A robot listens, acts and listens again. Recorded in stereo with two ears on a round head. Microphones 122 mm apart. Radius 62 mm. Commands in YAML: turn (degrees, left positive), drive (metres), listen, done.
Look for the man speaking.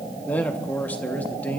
turn: 30
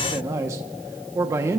turn: -20
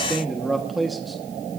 done: "Facing the man speaking, 1 to 2 m away."